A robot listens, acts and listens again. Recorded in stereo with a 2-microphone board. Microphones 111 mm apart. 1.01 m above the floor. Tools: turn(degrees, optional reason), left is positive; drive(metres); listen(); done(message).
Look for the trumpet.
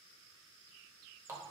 listen()
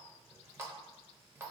listen()
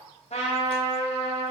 turn(degrees=90)
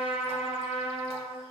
turn(degrees=-10, reason="So it is at 10° right.")
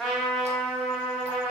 done("Facing the trumpet, under 1 m away.")